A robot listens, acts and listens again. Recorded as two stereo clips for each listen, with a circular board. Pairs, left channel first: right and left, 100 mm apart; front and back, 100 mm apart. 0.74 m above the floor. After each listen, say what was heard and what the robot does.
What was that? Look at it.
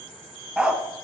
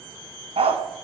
The dog barking: 170° left. Turn 170° left.
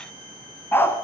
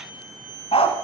The dog barking is now 25° right. Turn 25° right.
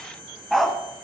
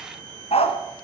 Found it: a dog barking, straight ahead.